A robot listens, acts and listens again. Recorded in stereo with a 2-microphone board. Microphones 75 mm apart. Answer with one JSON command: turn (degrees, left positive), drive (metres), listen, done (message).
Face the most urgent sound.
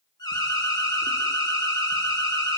{"turn": 70}
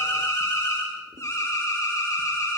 {"turn": 45}
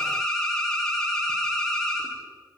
{"turn": 10}
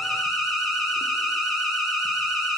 {"done": "Found it: an alarm, straight ahead."}